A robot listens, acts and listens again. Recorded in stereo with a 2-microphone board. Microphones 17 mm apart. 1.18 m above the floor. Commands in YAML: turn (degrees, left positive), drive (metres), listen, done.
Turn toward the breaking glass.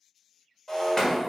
turn: 20
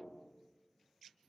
listen: true
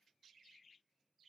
done: "I heard breaking glass, but can't make it out now. It was about straight ahead or 140° left."